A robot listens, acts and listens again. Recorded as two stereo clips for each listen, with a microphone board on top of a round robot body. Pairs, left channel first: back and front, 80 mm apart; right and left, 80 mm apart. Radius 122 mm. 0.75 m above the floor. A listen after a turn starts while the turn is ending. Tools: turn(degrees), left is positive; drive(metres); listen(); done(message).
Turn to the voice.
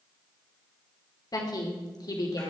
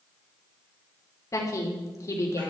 turn(degrees=-140)
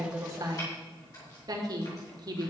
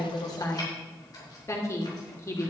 turn(degrees=-35)
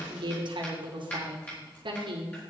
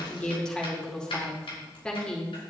turn(degrees=-10)
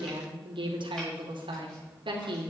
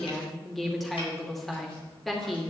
done("Facing the woman speaking.")